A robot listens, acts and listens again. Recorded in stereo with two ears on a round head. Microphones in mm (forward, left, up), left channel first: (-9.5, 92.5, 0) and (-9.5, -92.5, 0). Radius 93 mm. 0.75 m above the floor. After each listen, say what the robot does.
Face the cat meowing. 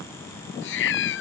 Turn 65° left.
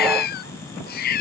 Turn 45° left.
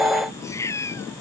Turn 15° left.
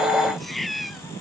Facing the cat meowing.